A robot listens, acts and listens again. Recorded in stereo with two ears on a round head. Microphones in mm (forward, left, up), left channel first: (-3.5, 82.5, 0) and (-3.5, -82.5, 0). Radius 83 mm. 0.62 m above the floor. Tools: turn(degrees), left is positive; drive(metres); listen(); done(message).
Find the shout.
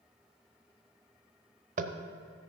listen()
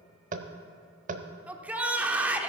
turn(degrees=-30)
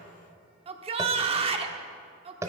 turn(degrees=-145)
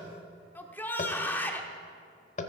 turn(degrees=10)
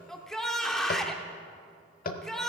done("Facing the shout.")